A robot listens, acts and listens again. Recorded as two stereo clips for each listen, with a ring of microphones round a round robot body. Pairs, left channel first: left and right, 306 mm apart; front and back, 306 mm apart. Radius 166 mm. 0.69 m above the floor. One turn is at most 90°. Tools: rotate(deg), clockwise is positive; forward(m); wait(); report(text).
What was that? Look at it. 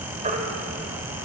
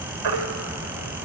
rotate(90)
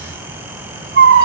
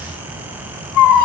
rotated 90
rotate(40)
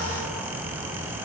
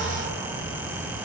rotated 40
wait()
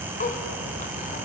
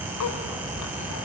wait()
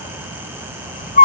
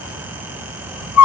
rotate(-25)
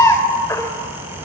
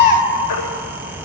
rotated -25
rotate(-10)
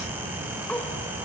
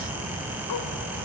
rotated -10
wait()
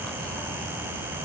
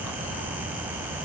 wait()
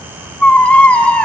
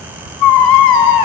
report("Found it: a baby crying, straight ahead, 2 to 4 m away.")